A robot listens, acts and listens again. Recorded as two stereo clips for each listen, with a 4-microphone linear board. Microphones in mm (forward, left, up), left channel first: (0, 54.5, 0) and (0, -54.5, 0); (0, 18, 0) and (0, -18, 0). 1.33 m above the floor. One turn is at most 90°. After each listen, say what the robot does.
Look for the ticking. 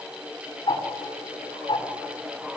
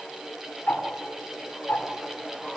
Turn 50° left.
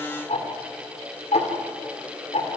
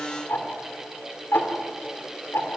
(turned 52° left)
Turn 75° left.
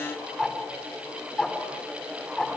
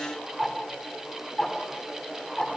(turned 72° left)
Found it: ticking, straight ahead.